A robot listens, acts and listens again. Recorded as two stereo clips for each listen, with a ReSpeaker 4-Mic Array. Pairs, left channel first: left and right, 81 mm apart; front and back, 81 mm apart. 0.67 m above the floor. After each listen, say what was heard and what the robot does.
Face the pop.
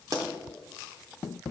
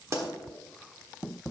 The pop: 130° right. Turn 130° right.
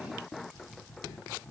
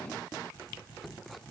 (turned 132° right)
Facing where the pop came from. I can't hear it now.